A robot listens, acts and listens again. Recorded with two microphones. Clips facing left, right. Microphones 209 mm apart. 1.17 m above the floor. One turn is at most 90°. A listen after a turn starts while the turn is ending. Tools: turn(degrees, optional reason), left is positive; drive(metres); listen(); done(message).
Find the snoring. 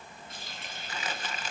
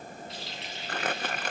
listen()
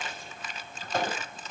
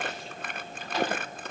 listen()
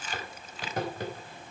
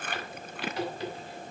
done("I can't make out snoring, only crumpling and a running tap.")